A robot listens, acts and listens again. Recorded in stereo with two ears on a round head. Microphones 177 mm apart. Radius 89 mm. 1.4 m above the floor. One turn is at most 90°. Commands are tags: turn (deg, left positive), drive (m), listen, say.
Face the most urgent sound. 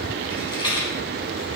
<listen/>
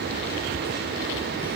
<listen/>
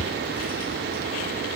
<say>I can't make out anything urgent, only a rattle.</say>